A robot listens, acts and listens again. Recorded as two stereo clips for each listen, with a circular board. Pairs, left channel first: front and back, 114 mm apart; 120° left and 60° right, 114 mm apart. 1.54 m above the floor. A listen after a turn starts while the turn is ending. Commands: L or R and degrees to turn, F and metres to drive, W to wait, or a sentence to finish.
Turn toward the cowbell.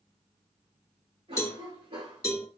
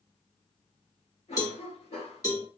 L60
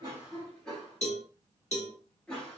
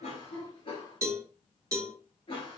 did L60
Found it: a cowbell, straight ahead, 2 to 4 m away.